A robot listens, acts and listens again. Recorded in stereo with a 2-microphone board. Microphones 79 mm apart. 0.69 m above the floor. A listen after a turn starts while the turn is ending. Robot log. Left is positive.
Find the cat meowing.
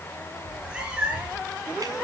cmd yaw -30
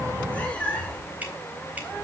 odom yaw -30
note: So it is at 15° left.
cmd yaw +15
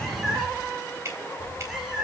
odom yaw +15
end: Facing the cat meowing, over 4 m away.